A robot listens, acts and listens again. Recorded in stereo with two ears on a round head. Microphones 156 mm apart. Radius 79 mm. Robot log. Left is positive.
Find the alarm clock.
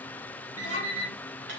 note: The alarm clock: about 15° right or 165° right.
cmd yaw -15
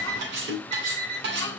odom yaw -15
note: So it is at 145° right.
cmd yaw -145
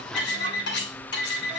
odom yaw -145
note: The alarm clock is now 10° right.
cmd yaw -10
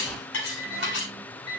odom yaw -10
end: Found it: an alarm clock, straight ahead.